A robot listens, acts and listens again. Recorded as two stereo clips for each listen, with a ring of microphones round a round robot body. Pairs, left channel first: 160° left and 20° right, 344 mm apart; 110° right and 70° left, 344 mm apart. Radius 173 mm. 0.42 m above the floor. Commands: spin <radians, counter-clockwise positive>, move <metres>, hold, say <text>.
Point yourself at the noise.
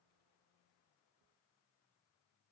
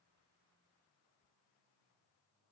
hold
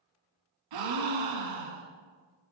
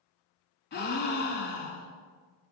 spin -0.87
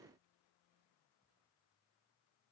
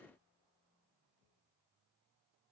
say Facing where the gasp came from. I can't hear it now.